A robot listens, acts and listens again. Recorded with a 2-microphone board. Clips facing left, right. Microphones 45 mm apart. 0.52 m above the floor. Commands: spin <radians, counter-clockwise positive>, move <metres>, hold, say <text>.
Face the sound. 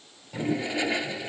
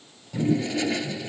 spin 0.26
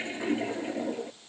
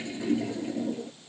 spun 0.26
spin 2.62
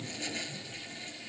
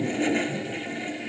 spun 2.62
spin -0.70
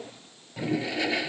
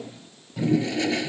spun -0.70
spin 0.17
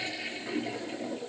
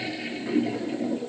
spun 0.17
say Found it: a toilet flushing, straight ahead.